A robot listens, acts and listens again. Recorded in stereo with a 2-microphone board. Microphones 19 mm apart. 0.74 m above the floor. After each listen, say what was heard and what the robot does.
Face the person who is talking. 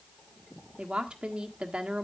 The woman speaking: about 65° right or 115° right. Turn 65° right.
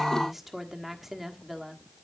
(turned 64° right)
So it is at 10° right. Turn 10° right.
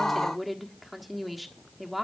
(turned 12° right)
Found it: a woman speaking, straight ahead.